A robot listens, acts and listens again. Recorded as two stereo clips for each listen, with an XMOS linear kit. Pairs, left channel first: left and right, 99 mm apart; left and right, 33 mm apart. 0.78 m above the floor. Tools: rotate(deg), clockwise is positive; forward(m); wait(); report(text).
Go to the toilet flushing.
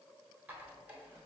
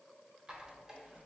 wait()
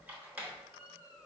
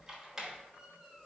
wait()
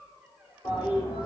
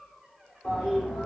rotate(-50)
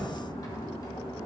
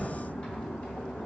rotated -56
rotate(-70)
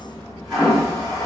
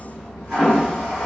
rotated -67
forward(1.0)
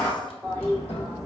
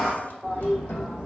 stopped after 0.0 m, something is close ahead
report("Something is in my way. I am facing the toilet flushing but have not reached it.")